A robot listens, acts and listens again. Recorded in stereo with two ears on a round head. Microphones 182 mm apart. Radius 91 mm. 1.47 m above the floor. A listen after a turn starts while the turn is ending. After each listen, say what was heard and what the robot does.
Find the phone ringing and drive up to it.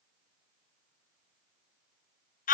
Keep listening.
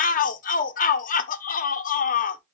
Keep listening.
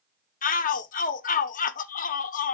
I can't make out a phone ringing to turn to.